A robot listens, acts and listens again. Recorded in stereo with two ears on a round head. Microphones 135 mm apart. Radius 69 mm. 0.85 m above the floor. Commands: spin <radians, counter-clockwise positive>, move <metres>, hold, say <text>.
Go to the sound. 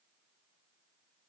hold
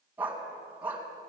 spin -0.52
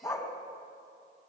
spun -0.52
spin 0.35
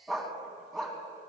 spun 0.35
move 1.0
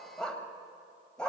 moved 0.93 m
move 1.0
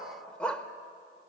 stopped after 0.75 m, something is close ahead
say Arrived at the dog barking, straight ahead.